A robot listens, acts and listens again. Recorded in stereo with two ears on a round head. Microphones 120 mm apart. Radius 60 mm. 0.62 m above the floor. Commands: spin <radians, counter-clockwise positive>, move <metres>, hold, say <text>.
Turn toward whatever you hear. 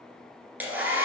spin -0.52
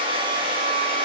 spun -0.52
spin -2.36
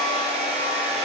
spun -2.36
spin -0.87
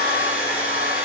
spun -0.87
spin -0.17
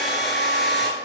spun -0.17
say Found it: a hair dryer, straight ahead.